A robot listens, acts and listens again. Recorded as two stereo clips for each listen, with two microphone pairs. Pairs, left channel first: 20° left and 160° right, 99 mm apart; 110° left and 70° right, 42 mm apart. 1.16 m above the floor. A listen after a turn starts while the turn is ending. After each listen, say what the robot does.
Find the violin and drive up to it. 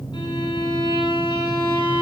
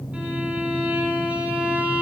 Turn 15° right.
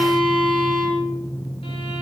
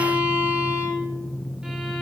Drive 1.0 m forward.
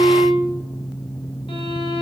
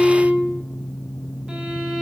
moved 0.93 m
Drive 1.0 m forward.
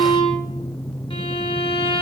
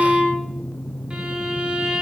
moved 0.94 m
Drive 1.0 m forward.
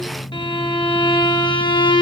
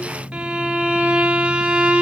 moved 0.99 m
Turn 15° right.
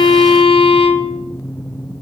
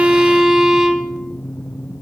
Drive 1.0 m forward.
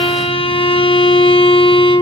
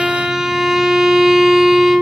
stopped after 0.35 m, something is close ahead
I am next to the violin.